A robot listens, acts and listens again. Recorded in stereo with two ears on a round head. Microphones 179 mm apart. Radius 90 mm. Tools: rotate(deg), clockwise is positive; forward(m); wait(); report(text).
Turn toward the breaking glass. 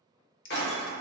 rotate(-55)
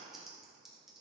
wait()
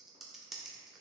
report("I heard breaking glass, but can't make it out now. It was about straight ahead or 70° left.")